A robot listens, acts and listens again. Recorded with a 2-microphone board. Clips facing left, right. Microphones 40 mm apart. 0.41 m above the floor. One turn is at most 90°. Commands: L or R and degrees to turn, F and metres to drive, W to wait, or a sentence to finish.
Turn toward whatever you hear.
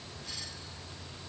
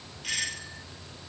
R70
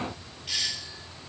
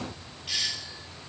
Found it: a doorbell, straight ahead.